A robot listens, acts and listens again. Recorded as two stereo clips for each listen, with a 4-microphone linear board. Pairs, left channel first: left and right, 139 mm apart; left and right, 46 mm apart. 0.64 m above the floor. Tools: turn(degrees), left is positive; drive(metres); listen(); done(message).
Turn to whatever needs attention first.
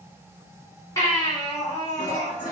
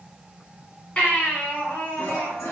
turn(degrees=25)
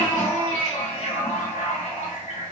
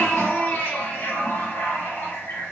turn(degrees=125)
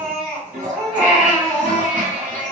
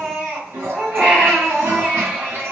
turn(degrees=-10)
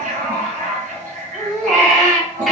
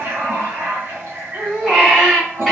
done("Found it: a baby crying, straight ahead, 1 to 2 m away.")